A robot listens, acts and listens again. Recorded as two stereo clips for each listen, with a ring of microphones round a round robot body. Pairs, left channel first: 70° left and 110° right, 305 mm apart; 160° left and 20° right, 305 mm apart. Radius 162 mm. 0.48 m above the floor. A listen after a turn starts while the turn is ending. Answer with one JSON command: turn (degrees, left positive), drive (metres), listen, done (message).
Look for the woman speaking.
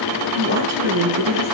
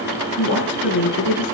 {"turn": -150}
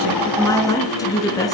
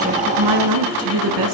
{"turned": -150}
{"turn": -10}
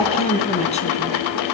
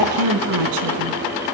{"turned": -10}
{"done": "Found it: a woman speaking, straight ahead, over 4 m away."}